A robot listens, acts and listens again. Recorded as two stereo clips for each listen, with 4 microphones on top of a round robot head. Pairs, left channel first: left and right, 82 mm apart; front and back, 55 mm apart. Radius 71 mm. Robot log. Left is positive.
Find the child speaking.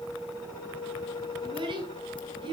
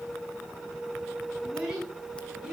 note: The child speaking: 105° right.
cmd yaw -105
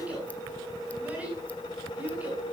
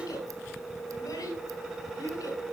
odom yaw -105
note: The child speaking is now 15° right.
cmd yaw -15
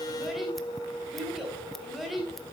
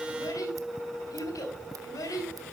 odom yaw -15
end: Found it: a child speaking, straight ahead, over 4 m away.